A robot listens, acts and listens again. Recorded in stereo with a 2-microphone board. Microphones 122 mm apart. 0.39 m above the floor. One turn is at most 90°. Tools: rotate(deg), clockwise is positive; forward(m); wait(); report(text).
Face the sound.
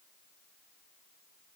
wait()
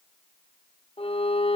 rotate(-50)
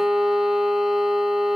report("Found it: a violin, straight ahead.")